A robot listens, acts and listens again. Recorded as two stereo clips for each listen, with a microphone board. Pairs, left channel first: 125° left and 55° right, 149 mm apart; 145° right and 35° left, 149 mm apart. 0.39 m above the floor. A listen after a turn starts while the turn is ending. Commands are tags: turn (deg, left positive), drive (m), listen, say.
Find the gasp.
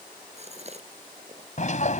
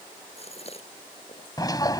<turn deg="-100"/>
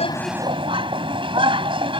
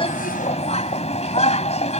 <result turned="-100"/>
<say>Facing where the gasp came from. I can't hear it now.</say>